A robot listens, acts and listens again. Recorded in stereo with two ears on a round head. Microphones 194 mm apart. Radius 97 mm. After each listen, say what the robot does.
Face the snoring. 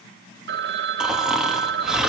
Turn 30° right.
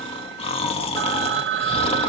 Turn 25° left.
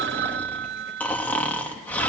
Facing the snoring, 2 to 4 m away.